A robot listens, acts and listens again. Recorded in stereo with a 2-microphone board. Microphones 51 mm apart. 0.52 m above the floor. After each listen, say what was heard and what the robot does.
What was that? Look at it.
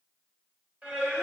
The singing: about 30° right or 150° right. Turn 30° right.
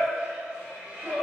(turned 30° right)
The singing: about 25° right or 155° right. Turn 25° right.
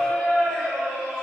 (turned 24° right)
So it is at 10° right. Turn 10° right.
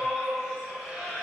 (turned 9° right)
Found it: singing, straight ahead, 2 to 4 m away.